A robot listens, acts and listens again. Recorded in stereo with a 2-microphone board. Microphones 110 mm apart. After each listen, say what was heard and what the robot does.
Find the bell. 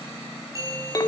The bell: about 30° right or 150° right. Turn 30° right.
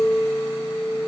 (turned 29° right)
Keep listening.
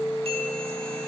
Keep listening.
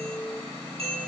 So it is at 120° right. Turn 120° right.
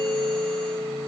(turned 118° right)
Keep listening.
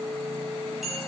Found it: a bell, straight ahead, over 4 m away.